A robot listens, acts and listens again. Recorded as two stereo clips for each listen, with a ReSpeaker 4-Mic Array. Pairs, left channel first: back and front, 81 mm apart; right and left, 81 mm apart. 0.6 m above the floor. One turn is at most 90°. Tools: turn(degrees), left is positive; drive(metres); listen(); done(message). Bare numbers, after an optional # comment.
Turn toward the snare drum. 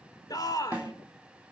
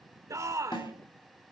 # The snare drum: 75° right.
turn(-75)
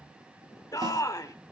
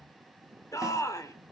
listen()
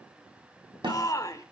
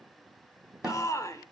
# The snare drum is now 10° left.
turn(10)
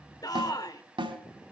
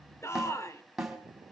done("Found it: a snare drum, straight ahead, 2 to 4 m away.")